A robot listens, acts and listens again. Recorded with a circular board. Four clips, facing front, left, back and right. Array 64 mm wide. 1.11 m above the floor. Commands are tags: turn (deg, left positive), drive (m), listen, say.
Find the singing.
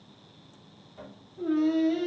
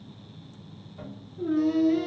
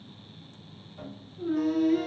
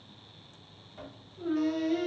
<turn deg="-25"/>
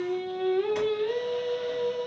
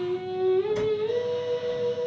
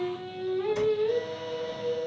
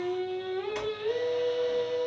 <turn deg="-30"/>
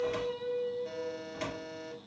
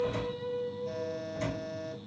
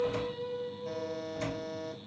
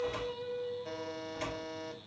<turn deg="-20"/>
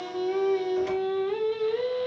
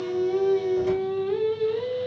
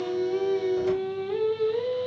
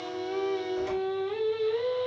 <turn deg="-10"/>
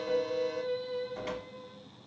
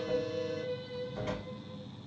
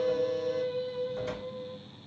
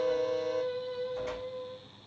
<say>Facing the singing, 2 to 4 m away.</say>